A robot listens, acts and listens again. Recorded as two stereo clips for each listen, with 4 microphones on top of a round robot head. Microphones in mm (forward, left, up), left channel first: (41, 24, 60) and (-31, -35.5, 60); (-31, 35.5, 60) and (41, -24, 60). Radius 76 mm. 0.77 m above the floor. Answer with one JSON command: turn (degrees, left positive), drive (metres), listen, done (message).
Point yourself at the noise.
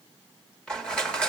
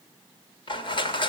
{"turn": 120}
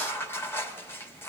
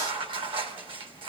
{"turn": -25}
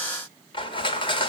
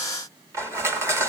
{"turn": 20}
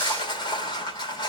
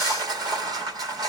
{"done": "Facing the crushing, 1 to 2 m away."}